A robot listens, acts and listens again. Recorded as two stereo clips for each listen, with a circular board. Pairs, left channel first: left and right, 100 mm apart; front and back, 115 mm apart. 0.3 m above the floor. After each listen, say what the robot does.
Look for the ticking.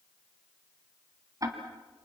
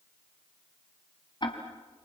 Turn 40° right.
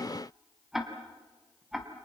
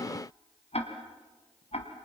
Found it: ticking, straight ahead.